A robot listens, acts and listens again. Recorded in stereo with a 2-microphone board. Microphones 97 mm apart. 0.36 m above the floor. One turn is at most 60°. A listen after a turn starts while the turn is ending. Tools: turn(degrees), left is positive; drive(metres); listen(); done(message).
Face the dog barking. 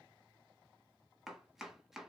listen()
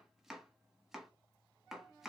listen()
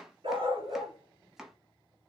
turn(degrees=-60)
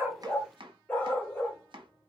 turn(degrees=15)
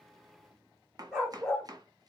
done("Found it: a dog barking, straight ahead.")